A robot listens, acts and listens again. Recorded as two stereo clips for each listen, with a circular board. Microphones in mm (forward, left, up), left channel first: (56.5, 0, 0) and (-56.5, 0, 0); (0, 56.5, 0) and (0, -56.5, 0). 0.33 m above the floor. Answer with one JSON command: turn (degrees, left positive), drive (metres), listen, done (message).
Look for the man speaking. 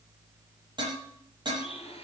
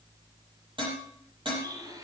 {"listen": true}
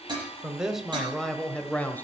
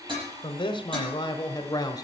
{"turn": 65}
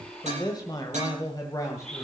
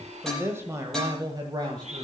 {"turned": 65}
{"turn": -55}
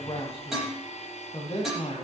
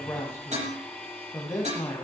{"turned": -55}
{"turn": 30}
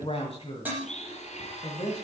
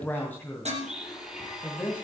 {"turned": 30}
{"turn": 20}
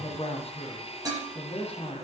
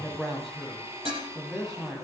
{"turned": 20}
{"done": "Facing the man speaking, 2 to 4 m away."}